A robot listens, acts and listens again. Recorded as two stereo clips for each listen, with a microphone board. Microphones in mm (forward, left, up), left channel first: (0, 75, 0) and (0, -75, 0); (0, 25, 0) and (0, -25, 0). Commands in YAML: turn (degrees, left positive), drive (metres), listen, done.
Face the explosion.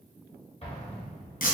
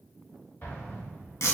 turn: 40
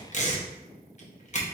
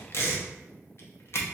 listen: true
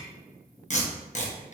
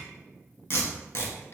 done: "I heard an explosion, but can't make it out now. It was about straight ahead or 100° left."